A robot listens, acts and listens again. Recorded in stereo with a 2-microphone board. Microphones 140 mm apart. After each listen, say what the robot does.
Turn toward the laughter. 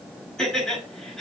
Turn 30° left.
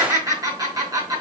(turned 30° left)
Turn 25° right.
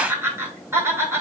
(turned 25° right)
Turn 20° right.
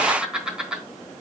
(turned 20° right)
Found it: laughter, straight ahead, over 4 m away.